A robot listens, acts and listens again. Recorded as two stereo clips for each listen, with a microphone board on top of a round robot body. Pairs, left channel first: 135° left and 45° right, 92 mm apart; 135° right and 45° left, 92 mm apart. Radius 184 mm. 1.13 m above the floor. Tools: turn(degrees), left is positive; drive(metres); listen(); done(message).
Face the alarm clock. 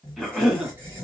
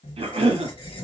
listen()
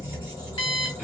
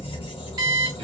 turn(degrees=95)
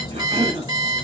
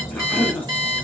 done("Found it: an alarm clock, straight ahead, 1 to 2 m away.")